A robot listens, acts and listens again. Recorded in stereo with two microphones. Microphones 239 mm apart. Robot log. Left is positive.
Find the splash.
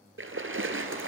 note: The splash: about 60° right or 120° right.
cmd yaw -60
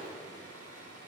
cmd idle
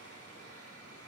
end: I heard a splash, but can't make it out now. It was about straight ahead or 60° right.